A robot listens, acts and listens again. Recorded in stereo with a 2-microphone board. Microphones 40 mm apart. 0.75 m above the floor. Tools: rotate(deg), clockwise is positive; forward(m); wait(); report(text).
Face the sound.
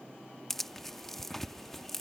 rotate(-30)
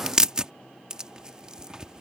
rotate(20)
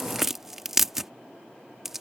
rotate(10)
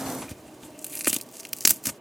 report("Found it: tearing paper, straight ahead.")